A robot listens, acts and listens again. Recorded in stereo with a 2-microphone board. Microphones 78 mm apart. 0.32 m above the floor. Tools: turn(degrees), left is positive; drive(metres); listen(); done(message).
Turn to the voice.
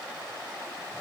listen()
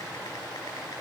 listen()
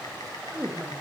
turn(degrees=-20)
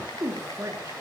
turn(degrees=-140)
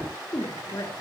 turn(degrees=45)
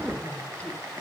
listen()
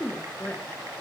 turn(degrees=20)
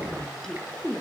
done("Facing the woman speaking, over 4 m away.")